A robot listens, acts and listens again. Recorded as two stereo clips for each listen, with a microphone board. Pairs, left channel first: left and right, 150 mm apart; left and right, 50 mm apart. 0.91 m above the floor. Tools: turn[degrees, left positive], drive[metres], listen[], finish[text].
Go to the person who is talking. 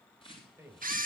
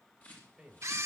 Thought: The man speaking: about 20° right or 160° right.
Action: turn[-20]
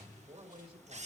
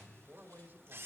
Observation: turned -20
Thought: So it is at 145° right.
Action: turn[-145]
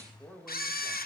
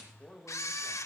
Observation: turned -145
Action: drive[1.0]
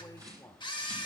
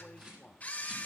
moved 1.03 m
Thought: The man speaking is now 15° left.
Action: turn[15]
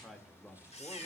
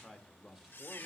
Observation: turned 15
Action: drive[1.0]
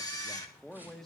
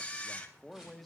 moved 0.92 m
Action: drive[1.0]
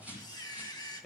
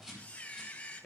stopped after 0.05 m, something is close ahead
Action: finish[Arrived at the man speaking, straight ahead.]